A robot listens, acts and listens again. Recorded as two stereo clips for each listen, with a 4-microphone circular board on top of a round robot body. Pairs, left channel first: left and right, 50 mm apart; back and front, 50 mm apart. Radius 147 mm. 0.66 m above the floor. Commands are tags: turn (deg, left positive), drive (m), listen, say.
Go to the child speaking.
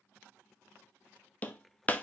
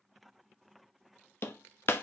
<listen/>
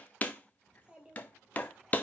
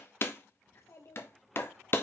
<turn deg="-160"/>
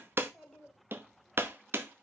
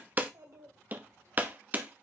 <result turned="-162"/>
<drive m="1.0"/>
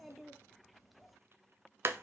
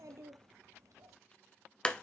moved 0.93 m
<drive m="1.0"/>
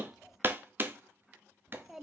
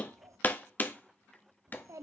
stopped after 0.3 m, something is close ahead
<say>I am next to the child speaking.</say>